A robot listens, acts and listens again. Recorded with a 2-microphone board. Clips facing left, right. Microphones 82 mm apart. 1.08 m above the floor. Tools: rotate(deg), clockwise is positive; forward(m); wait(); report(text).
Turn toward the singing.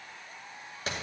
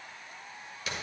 wait()
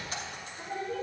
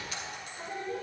rotate(30)
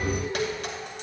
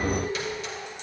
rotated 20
rotate(-25)
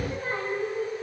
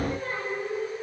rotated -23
rotate(-20)
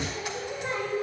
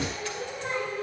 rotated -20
rotate(-15)
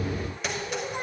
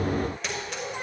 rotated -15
rotate(-10)
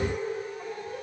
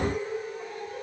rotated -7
report("Found it: singing, straight ahead, 2 to 4 m away.")